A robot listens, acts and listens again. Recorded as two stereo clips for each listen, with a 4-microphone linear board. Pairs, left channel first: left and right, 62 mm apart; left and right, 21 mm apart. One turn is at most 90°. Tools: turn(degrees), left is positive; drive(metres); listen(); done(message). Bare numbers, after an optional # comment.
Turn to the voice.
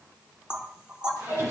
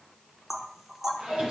listen()
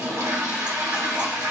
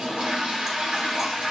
listen()
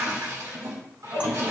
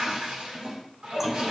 done("I can't make out anyone speaking to turn to.")